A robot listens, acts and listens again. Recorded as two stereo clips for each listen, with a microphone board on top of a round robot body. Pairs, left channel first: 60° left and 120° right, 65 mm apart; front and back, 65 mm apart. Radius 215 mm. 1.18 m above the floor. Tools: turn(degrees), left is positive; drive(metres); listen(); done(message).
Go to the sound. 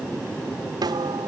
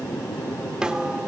turn(degrees=-100)
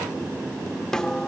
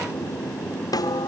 turn(degrees=-20)
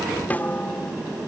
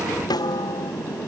drive(metres=1.0)
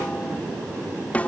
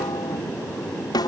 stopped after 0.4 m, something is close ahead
turn(degrees=-10)
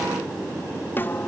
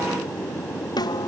done("Blocked. The snare drum is further on, straight ahead.")